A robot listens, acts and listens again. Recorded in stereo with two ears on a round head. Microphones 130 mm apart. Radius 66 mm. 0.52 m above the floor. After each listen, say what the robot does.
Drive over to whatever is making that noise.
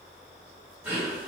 Turn 30° right.
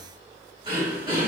Turn 135° right.
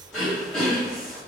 Drive 1.0 m forward.
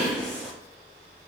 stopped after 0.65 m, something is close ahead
Turn 10° left.
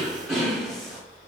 I am next to the throat clearing.